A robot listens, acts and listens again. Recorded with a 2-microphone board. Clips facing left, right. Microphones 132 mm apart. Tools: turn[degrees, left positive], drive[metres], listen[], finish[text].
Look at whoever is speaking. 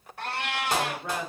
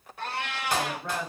Action: turn[30]
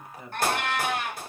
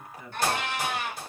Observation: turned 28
Thought: So it is at 140° left.
Action: turn[140]
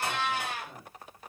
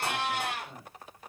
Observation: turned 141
Action: finish[Facing the woman speaking, 1 to 2 m away.]